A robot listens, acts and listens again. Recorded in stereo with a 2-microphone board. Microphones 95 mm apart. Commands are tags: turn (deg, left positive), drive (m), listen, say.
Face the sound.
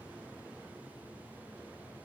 <listen/>
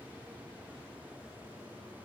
<listen/>
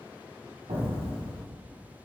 <turn deg="-75"/>
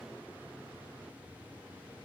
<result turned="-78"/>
<listen/>
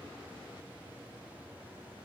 <say>I heard an explosion, but can't make it out now. It was about 5° left or 30° right.</say>